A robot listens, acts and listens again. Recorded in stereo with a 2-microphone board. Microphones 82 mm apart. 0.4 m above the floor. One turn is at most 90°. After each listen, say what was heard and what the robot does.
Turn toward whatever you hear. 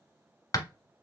The hammering: about 45° left or 135° left. Turn 45° left.
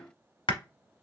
So it is at 90° left. Turn 90° left.
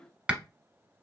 The hammering is now 10° right. Turn 10° right.
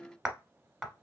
Facing the hammering, 1 to 2 m away.